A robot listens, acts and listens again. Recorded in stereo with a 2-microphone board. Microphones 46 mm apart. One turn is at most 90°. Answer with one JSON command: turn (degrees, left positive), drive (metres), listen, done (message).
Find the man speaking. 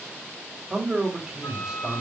{"turn": -30}
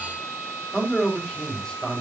{"turn": 15}
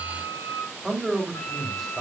{"done": "Facing the man speaking, over 4 m away."}